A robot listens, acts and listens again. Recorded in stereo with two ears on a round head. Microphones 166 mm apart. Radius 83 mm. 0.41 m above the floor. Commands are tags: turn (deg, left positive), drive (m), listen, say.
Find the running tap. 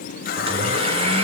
<turn deg="55"/>
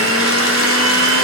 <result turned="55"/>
<listen/>
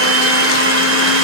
<listen/>
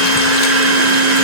<say>I heard a running tap, but can't make it out now. It was about straight ahead or 70° left.</say>